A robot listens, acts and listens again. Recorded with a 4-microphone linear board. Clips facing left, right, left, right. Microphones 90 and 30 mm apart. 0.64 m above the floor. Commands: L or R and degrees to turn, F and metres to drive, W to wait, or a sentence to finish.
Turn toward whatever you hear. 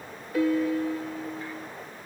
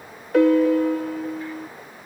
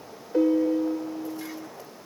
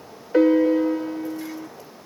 R90
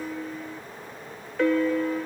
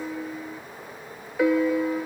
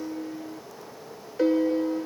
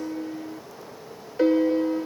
R10
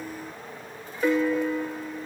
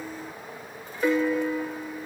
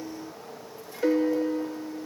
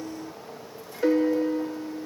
Found it: a piano, straight ahead.